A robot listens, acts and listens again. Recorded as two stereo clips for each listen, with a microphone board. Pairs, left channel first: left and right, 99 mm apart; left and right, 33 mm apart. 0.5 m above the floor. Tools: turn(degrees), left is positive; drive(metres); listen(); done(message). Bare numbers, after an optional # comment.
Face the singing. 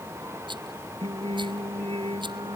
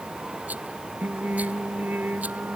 # The singing: about 70° right or 110° right.
turn(-70)
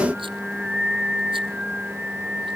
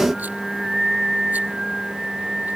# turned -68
# So it is at 10° right.
turn(-10)
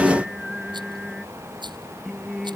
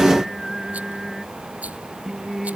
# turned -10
done("Facing the singing.")